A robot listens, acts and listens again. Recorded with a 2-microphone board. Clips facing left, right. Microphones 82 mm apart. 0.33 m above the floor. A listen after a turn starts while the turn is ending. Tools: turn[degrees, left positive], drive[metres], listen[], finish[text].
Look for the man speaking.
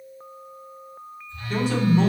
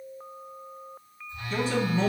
Thought: The man speaking: about 55° left or 125° left.
Action: turn[55]
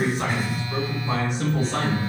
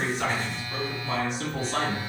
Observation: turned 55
Thought: So it is at 60° left.
Action: turn[60]
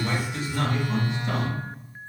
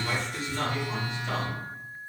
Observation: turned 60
Thought: The man speaking is now 10° left.
Action: turn[10]
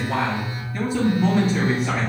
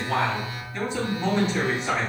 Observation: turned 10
Action: finish[Facing the man speaking.]